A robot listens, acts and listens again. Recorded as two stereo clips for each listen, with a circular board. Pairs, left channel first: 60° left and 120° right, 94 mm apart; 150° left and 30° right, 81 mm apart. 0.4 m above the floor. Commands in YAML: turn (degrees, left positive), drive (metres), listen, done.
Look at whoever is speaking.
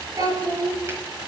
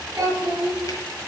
turn: -80
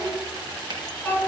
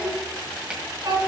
turn: -20
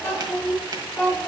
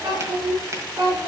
done: "Facing the child speaking."